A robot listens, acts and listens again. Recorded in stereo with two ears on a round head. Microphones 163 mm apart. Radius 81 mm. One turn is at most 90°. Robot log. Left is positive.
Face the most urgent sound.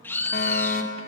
note: The fire alarm: about 50° left or 130° left.
cmd yaw +50
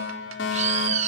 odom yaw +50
note: So it is at 75° left.
cmd yaw +75
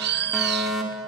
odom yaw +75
end: Facing the fire alarm, over 4 m away.